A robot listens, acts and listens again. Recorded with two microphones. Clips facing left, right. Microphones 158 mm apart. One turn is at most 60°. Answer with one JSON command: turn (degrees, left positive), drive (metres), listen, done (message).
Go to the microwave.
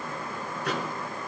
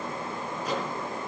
{"turn": 60}
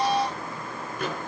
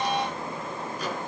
{"turn": 55}
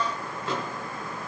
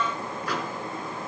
{"turn": 25}
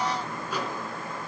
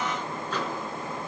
{"turn": 10}
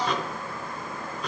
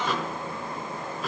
{"drive": 1.0}
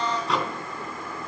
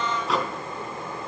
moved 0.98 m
{"drive": 1.0}
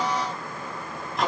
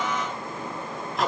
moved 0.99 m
{"drive": 1.0}
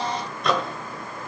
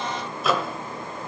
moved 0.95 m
{"drive": 1.0}
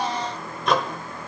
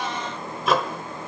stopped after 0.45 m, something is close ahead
{"done": "Arrived at the microwave, straight ahead."}